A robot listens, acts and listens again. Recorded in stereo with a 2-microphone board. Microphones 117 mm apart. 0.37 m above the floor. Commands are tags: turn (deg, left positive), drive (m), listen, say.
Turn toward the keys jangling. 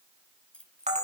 <turn deg="30"/>
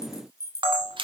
<turn deg="155"/>
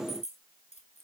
<turn deg="75"/>
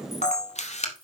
<listen/>
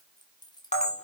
<turn deg="40"/>
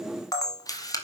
<listen/>
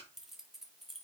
<say>Facing the keys jangling, 2 to 4 m away.</say>